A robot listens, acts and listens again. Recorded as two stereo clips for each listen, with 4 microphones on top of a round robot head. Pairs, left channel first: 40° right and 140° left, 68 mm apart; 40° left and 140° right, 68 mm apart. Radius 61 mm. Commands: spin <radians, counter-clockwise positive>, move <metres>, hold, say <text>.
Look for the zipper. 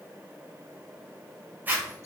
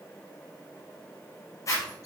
spin 1.40
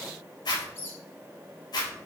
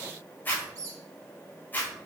spin -0.44
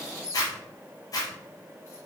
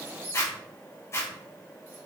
spin -0.17
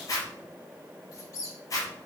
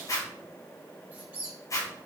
say Facing the zipper, 2 to 4 m away.